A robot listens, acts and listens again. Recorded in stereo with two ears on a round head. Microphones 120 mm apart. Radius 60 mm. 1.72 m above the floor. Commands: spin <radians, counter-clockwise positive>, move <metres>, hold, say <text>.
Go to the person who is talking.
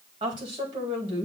spin -0.61
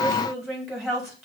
move 1.0
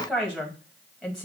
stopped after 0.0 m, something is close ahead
say Blocked. The woman speaking is further on, straight ahead.